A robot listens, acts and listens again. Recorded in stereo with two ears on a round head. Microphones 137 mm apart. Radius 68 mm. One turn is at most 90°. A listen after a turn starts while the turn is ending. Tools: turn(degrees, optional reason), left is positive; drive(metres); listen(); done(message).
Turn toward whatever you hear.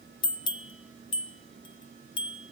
turn(degrees=30, reason="The bell: about 30° left or 150° left.")
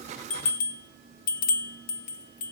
turn(degrees=90, reason="So it is at 110° left.")
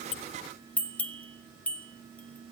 turn(degrees=10, reason="The bell is now 10° left.")
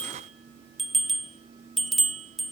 done("Facing the bell, 1 to 2 m away.")